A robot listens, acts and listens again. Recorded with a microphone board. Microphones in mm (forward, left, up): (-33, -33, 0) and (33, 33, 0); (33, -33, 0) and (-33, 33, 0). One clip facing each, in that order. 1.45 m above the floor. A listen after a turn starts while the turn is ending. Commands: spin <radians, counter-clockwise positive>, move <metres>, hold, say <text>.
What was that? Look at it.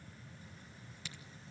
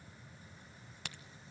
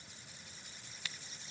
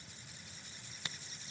spin 1.31
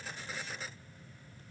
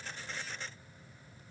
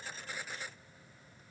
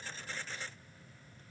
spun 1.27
say I heard a crack from this way, but can't make it out now.